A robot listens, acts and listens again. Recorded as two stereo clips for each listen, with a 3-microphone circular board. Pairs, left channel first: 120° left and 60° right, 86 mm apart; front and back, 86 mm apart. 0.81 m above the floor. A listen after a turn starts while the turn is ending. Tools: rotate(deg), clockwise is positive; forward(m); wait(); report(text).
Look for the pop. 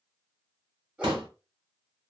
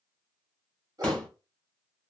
rotate(75)
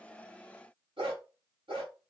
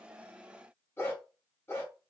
report("Facing where the pop came from. I can't hear it now.")